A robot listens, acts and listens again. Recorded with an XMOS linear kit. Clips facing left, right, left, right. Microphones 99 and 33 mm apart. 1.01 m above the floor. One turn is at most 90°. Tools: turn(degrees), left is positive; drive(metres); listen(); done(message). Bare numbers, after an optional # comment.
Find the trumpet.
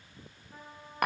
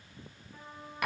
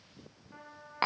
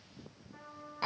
# The trumpet: about 55° left or 125° left.
turn(55)
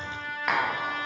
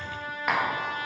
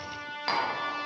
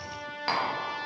# So it is at 70° left.
turn(70)
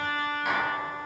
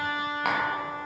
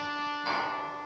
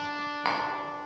# The trumpet is now 15° right.
turn(-15)
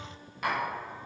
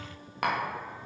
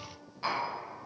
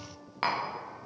listen()
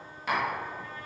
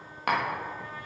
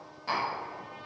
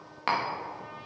listen()
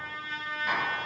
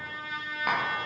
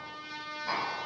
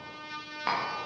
done("Facing the trumpet, 2 to 4 m away.")